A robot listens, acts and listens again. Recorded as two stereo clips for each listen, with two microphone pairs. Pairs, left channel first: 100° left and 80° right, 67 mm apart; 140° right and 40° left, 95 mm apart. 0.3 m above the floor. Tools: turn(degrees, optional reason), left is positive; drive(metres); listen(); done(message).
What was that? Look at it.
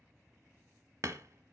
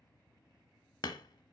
turn(degrees=-110, reason="The hammering: 110° right.")
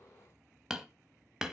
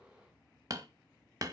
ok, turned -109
done("Facing the hammering.")